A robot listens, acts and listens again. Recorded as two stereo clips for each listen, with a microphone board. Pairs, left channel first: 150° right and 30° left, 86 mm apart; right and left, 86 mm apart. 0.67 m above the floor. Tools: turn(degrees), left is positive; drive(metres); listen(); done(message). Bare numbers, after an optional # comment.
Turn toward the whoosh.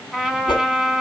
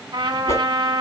# The whoosh: 140° right.
turn(-140)
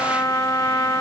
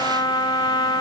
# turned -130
# Nothing new. It was at 10° right.
turn(-10)
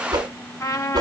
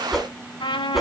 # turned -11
done("Facing the whoosh.")